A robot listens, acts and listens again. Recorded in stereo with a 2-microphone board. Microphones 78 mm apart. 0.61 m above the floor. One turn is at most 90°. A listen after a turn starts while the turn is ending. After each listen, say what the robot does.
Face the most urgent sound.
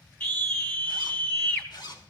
Turn 30° left.
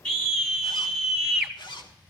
Facing the scream.